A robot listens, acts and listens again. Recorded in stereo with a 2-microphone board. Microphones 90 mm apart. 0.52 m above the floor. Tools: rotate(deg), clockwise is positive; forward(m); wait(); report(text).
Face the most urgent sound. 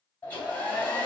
wait()
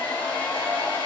wait()
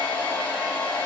report("I can't make out anything urgent, only a hair dryer.")